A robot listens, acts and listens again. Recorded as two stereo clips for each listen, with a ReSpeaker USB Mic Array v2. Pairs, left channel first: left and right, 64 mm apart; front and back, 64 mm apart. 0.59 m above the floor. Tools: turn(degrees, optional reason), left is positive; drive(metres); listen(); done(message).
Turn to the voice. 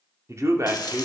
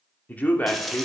turn(degrees=-65, reason="The man speaking: 65° right.")
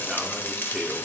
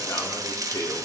done("Found it: a man speaking, straight ahead.")